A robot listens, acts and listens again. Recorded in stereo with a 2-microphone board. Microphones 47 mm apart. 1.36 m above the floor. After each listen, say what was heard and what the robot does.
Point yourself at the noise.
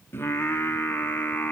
The singing: about 40° left or 140° left. Turn 40° left.
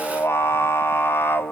So it is at 130° left. Turn 130° left.
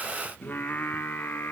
The singing is now 40° left. Turn 40° left.
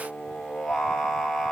Found it: singing, straight ahead.